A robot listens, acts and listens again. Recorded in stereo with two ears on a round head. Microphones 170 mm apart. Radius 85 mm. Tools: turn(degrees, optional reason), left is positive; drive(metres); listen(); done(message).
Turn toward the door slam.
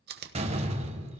turn(degrees=-35, reason="The door slam: about 35° right or 145° right.")
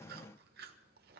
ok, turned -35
listen()
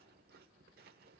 done("I heard a door slam, but can't make it out now. It was about straight ahead or 110° right.")